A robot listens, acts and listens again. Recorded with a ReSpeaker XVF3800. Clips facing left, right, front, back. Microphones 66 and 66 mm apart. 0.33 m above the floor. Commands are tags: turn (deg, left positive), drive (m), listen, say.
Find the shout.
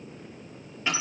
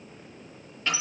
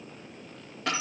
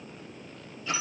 <listen/>
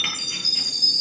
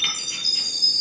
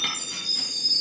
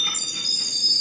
<listen/>
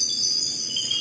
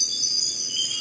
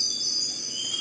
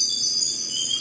<say>I can't make out a shout, only a chime.</say>